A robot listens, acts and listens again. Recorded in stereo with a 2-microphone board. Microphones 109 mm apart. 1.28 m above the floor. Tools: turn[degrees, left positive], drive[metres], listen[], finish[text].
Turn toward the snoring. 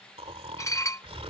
Thought: The snoring: about 75° right or 105° right.
Action: turn[-75]
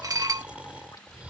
Thought: So it is at 15° right.
Action: turn[-15]
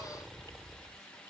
Action: finish[Found it: snoring, straight ahead.]